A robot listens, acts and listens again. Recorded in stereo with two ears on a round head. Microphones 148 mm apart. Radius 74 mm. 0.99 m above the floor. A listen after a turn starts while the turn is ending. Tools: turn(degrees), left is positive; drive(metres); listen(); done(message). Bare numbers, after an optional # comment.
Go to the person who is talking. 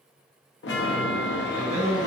# The man speaking: about 70° right or 110° right.
turn(-70)
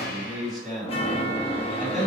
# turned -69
drive(1.0)
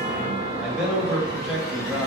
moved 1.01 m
drive(1.0)
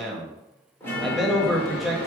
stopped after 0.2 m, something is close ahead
done("I am next to the man speaking.")